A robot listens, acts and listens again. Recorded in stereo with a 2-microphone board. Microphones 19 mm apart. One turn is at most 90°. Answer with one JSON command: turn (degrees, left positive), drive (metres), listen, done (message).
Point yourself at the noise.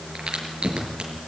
{"turn": -90}
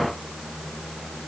{"done": "Facing where the crack came from. I can't hear it now."}